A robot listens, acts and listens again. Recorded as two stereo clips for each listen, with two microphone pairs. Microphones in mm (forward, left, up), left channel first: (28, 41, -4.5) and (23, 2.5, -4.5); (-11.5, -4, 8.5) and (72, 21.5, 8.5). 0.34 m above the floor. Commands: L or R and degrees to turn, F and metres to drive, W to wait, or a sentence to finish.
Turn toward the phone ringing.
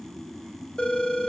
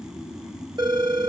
L25
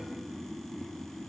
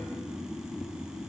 W
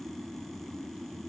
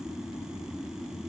W
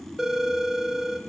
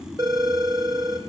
Found it: a phone ringing, straight ahead, under 1 m away.